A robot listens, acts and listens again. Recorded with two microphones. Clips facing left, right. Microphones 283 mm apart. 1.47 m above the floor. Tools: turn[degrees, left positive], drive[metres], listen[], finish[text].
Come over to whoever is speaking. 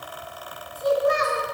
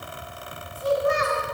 Thought: The child speaking: about 45° left or 135° left.
Action: turn[45]
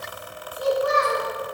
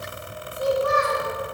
Thought: So it is at 90° left.
Action: turn[90]
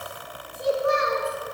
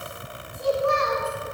Thought: The child speaking is now 20° left.
Action: turn[20]
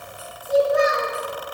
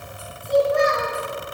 Thought: The child speaking is now 10° left.
Action: turn[10]
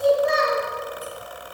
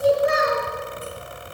Action: drive[1.0]
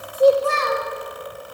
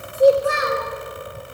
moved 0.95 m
Thought: The child speaking is now 15° right.
Action: turn[-15]
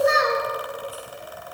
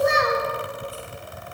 Action: drive[1.0]
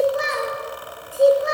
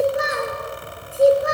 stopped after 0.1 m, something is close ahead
Action: finish[Arrived at the child speaking, straight ahead.]